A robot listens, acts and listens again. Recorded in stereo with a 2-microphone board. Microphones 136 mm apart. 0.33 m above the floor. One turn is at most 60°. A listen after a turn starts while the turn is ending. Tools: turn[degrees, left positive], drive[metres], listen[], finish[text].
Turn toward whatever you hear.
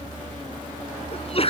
Thought: The sneeze: about 45° left or 135° left.
Action: turn[45]
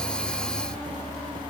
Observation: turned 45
Action: listen[]
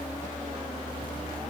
Action: finish[I heard a sneeze, but can't make it out now. It was about straight ahead or 90° left.]